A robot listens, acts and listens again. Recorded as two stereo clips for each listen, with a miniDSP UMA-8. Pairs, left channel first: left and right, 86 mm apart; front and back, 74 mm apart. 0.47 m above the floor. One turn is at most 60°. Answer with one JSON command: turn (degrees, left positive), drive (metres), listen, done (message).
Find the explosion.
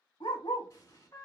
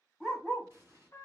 {"turn": 60}
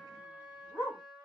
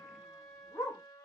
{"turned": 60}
{"turn": 60}
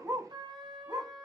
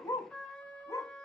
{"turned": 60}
{"turn": 10}
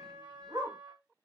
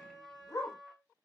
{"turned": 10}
{"done": "I heard an explosion from this way, but can't make it out now."}